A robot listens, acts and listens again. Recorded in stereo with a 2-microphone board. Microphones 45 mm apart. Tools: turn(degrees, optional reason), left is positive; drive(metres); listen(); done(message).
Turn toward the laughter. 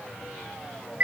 listen()
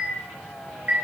listen()
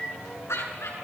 turn(degrees=90)
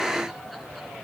listen()
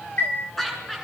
done("Found it: laughter, straight ahead, over 4 m away.")